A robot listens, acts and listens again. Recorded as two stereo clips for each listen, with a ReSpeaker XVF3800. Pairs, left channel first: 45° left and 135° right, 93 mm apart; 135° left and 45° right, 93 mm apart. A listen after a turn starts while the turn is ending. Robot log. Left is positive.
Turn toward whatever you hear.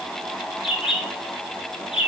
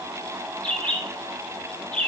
note: The bird: 60° left.
cmd yaw +60
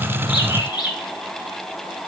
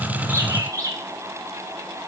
end: Found it: a bird, straight ahead.